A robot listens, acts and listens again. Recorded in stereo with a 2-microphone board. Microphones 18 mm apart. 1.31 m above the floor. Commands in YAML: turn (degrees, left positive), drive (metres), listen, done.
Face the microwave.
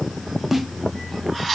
listen: true
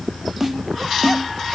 listen: true
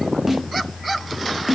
done: "I can't make out a microwave, only a snare drum."